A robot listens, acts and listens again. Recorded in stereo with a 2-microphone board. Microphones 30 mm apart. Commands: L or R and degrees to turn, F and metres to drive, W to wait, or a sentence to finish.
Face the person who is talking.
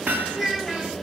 R30
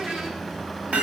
W
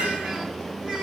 R20
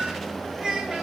R145
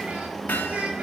R50
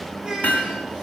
R25
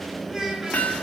R15
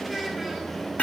W
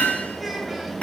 W
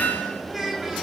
Found it: a child speaking, straight ahead, over 4 m away.